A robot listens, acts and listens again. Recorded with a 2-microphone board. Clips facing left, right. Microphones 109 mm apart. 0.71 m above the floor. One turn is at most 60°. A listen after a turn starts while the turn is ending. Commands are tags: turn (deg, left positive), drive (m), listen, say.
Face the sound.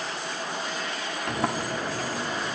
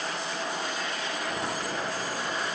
<turn deg="60"/>
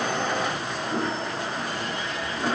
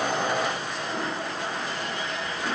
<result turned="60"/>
<turn deg="35"/>
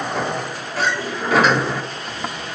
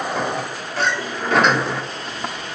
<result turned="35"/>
<say>Found it: a sliding door, straight ahead, under 1 m away.</say>